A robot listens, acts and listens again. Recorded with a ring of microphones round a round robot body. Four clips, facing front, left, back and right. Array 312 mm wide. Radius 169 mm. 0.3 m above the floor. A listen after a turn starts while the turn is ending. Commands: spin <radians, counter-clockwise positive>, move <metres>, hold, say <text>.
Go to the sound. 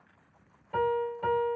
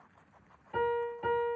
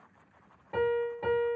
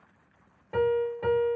spin -1.75
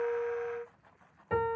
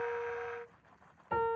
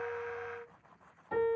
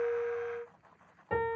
spin -0.61
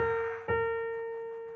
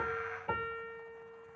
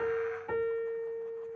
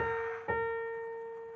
spin -0.26
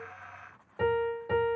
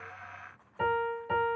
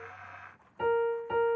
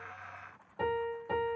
move 1.0
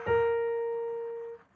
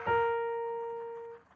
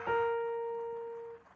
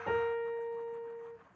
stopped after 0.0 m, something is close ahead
say Blocked. The piano is further on, straight ahead.